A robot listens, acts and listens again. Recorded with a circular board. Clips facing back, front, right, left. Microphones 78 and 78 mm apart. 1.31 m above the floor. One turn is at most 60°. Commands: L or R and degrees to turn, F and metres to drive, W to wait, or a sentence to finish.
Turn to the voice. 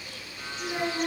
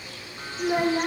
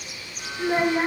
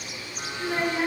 R30
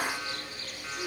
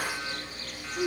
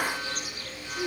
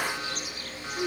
L10
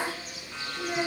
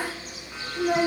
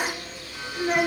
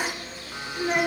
Found it: a child speaking, straight ahead.